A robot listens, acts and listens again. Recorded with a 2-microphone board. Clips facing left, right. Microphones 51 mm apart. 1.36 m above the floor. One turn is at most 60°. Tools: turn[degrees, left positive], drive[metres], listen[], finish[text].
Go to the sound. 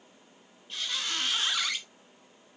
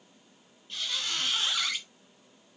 Action: turn[30]
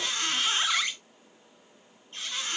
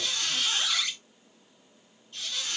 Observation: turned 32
Thought: So it is at 140° left.
Action: turn[60]
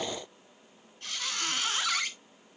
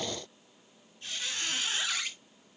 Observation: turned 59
Thought: The squeak is now 80° left.
Action: turn[60]
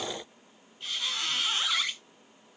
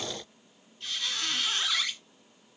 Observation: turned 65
Thought: The squeak is now 15° left.
Action: turn[15]
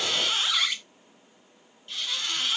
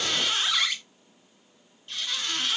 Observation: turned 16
Action: drive[1.0]
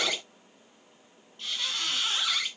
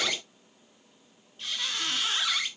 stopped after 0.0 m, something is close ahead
Action: finish[Blocked. The squeak is further on, straight ahead.]